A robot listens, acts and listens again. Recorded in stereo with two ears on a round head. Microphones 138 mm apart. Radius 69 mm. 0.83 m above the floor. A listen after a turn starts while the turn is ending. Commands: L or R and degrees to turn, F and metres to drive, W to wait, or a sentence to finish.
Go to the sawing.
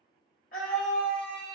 W
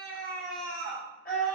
W
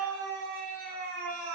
I can't make out sawing, only a scream.